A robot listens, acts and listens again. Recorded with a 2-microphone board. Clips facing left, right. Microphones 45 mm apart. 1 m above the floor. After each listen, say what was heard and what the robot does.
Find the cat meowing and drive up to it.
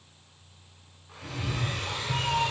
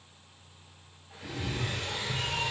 The cat meowing: about 35° left or 145° left. Turn 35° left.
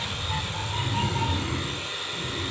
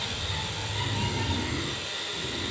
So it is at 110° left. Turn 110° left.
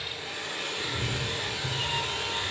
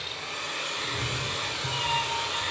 The cat meowing is now 10° right. Turn 10° right.
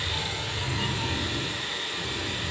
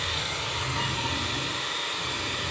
Drive 1.0 m forward.
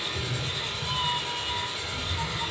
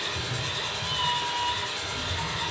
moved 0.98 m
The cat meowing is now 15° right. Turn 15° right.
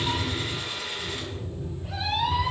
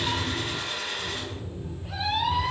Drive 1.0 m forward.
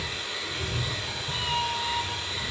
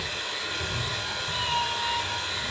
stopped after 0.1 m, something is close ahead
I am next to the cat meowing.